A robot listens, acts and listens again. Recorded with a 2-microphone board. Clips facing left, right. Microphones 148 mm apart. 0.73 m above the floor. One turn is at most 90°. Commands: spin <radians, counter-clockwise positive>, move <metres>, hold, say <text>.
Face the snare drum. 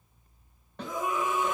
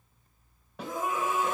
spin -0.52
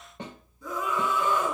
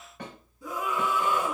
spin 0.44
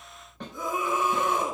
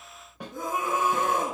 spin -0.17
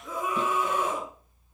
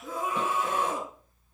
hold
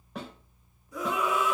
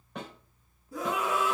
say Found it: a snare drum, straight ahead, 2 to 4 m away.